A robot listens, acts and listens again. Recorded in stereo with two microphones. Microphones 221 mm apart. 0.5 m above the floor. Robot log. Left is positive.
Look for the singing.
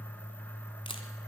cmd idle
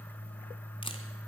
cmd idle
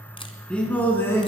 cmd yaw +30
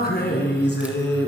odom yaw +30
note: So it is at 125° left.
cmd yaw +125
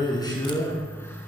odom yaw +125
note: The singing is now 15° left.
cmd yaw +15
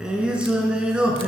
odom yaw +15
end: Found it: singing, straight ahead, 2 to 4 m away.